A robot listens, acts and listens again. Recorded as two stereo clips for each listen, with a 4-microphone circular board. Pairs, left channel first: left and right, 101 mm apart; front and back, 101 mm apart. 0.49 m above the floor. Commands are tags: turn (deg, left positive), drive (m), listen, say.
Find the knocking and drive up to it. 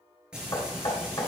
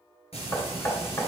<turn deg="50"/>
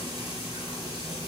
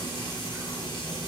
<listen/>
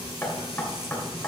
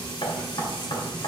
<turn deg="15"/>
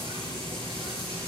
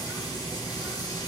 <listen/>
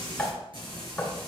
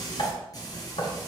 <drive m="1.0"/>
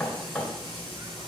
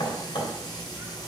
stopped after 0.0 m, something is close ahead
<say>Blocked. The knocking is further on, straight ahead.</say>